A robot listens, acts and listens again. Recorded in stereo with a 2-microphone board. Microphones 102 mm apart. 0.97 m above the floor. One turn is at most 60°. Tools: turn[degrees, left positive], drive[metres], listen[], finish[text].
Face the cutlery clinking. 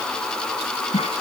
Action: listen[]
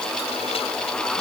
Action: listen[]
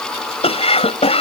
Action: finish[I can't make out cutlery clinking, only a cough.]